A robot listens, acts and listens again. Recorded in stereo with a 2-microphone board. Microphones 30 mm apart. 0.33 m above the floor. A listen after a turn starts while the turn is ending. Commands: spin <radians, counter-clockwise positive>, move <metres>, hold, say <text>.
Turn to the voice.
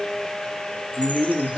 spin 0.70
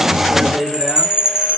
say Found it: a man speaking, straight ahead.